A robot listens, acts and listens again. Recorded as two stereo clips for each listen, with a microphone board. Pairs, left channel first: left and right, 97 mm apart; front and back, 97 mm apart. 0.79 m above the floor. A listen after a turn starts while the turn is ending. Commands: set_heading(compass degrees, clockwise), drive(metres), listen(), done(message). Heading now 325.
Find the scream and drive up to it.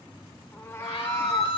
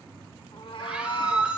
set_heading(225)
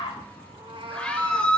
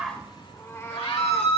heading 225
set_heading(215)
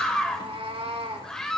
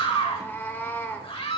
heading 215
drive(1.0)
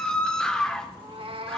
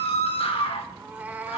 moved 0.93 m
set_heading(205)
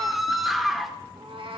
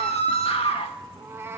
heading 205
drive(1.0)
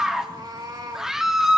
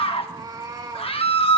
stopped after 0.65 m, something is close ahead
done("I am next to the scream.")